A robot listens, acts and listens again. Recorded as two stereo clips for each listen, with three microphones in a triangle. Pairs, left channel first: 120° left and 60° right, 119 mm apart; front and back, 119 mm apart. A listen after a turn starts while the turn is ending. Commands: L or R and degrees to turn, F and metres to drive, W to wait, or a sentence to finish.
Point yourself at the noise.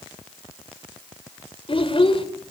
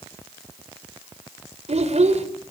L160
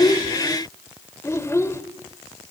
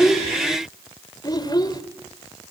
L55
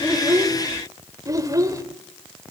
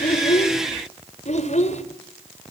Facing the child speaking, 2 to 4 m away.